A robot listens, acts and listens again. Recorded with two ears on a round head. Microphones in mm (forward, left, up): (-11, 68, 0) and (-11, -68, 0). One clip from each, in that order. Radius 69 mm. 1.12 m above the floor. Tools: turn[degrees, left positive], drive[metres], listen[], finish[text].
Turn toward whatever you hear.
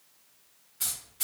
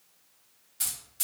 Action: turn[-90]
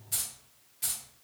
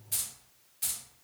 Thought: So it is at 20° right.
Action: turn[-20]
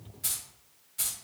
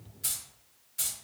Thought: The keys jangling is now 10° right.
Action: turn[-10]
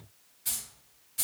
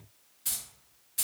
Thought: The keys jangling is now 25° right.
Action: turn[-25]
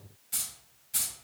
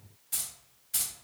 Thought: The keys jangling is now 15° right.
Action: turn[-15]
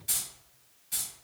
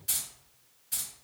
Action: finish[Found it: keys jangling, straight ahead, 1 to 2 m away.]